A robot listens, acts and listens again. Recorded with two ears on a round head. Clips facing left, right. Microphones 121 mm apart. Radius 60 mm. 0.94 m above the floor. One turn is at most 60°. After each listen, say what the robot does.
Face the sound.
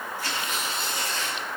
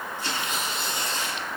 Turn 20° right.
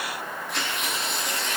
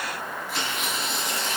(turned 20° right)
Facing the tearing paper.